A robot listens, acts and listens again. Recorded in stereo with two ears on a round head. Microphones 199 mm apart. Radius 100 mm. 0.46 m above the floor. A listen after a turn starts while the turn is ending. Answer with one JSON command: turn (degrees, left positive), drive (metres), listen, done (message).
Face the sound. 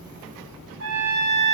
{"turn": -65}
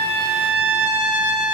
{"done": "Found it: a trumpet, straight ahead, 2 to 4 m away."}